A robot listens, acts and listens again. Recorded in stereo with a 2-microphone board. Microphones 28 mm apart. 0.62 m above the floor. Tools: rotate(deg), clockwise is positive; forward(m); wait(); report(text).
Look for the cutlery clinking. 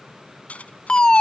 rotate(-50)
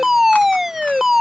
wait()
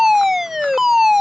wait()
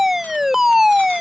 report("I heard cutlery clinking, but can't make it out now. It was about straight ahead or 80° left.")